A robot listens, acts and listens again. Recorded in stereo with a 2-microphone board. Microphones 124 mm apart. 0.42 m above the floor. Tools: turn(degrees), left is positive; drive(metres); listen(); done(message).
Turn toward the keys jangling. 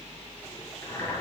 listen()
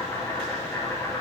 listen()
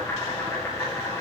done("I can't make out keys jangling to turn to.")